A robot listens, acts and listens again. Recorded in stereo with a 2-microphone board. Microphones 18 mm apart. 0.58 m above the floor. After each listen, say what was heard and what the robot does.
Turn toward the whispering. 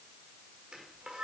Keep listening.
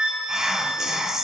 The whispering: about 30° right or 150° right. Turn 30° right.
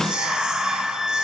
So it is at 115° right. Turn 115° right.
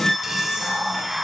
The whispering is now 40° right. Turn 40° right.
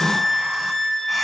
Keep listening.
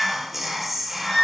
The whispering is now 15° right. Turn 15° right.
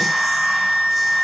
Keep listening.
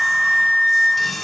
Facing the whispering.